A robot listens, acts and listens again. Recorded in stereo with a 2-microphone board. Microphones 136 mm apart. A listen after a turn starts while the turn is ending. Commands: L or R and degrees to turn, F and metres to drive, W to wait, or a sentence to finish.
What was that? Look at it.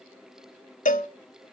L70
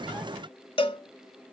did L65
L40
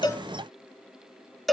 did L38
Found it: a cowbell, straight ahead.